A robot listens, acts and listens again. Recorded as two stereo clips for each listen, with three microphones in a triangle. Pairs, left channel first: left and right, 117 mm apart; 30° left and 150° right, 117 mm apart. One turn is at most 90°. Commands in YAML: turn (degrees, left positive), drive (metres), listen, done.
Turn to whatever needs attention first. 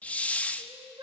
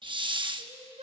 turn: -90
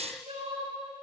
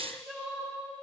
turn: -65
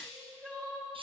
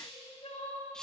done: "Found it: crying, straight ahead, over 4 m away."